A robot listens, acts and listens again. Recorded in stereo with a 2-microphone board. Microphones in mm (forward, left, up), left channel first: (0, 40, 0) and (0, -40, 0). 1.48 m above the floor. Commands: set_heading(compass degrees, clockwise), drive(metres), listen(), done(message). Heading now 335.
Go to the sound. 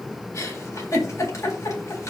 set_heading(295)
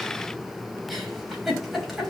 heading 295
drive(1.0)
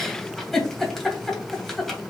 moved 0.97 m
drive(1.0)
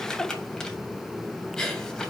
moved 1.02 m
drive(1.0)
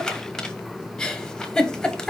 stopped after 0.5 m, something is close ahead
done("Arrived at the giggle, straight ahead.")